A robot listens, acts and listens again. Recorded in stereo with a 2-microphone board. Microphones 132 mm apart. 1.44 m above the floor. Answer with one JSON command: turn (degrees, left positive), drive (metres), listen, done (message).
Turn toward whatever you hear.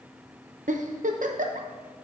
{"turn": -90}
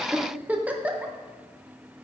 {"turn": -10}
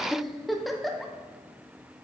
{"done": "Found it: a giggle, straight ahead, under 1 m away."}